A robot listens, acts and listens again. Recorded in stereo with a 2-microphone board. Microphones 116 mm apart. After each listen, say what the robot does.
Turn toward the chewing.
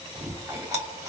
Turn 25° right.
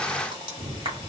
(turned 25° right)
Turn 125° right.
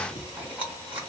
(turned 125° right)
Turn 15° right.
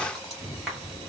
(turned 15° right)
Found it: chewing, straight ahead, 1 to 2 m away.